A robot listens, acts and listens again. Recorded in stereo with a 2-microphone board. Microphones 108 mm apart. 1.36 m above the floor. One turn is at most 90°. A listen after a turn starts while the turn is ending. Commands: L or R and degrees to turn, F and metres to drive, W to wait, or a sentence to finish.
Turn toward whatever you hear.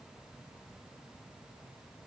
W
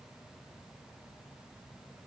W
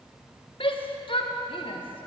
L50
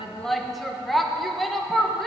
Found it: a shout, straight ahead, 1 to 2 m away.